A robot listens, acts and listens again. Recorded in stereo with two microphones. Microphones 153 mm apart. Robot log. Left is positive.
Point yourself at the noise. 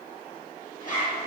note: The zipper: about 60° left or 120° left.
cmd yaw +60
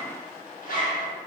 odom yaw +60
note: So it is at 60° left.
cmd yaw +60
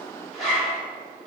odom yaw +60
end: Facing the zipper.